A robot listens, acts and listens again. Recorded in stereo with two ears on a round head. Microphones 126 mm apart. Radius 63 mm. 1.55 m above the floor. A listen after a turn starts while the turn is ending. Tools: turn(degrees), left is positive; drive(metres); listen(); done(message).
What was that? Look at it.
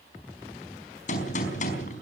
turn(degrees=50)
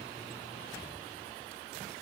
listen()
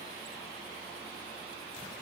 done("I heard a gunshot, but can't make it out now. It was about straight ahead or 80° left.")